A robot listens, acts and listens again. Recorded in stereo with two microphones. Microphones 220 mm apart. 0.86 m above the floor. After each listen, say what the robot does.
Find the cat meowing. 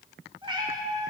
Turn 30° right.
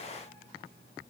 Keep listening.
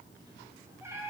Turn 30° right.
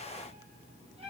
Turn 150° right.
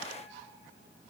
Keep listening.
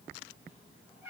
Turn 10° right.
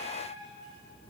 Keep listening.
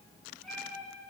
Found it: a cat meowing, straight ahead, 2 to 4 m away.